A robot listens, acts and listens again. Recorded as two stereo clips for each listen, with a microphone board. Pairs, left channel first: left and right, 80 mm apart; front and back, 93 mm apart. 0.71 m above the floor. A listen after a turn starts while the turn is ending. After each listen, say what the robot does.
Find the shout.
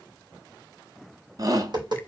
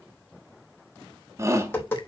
Turn 125° right.
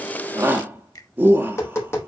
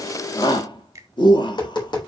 Turn 25° right.
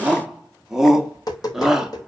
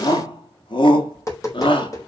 Found it: a shout, straight ahead.